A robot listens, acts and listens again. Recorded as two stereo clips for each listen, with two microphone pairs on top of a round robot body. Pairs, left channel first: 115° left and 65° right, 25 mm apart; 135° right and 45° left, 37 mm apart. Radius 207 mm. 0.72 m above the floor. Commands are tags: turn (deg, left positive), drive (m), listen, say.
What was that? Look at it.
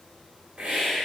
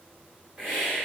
<turn deg="-10"/>
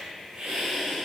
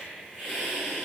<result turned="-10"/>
<say>Found it: a hiss, straight ahead.</say>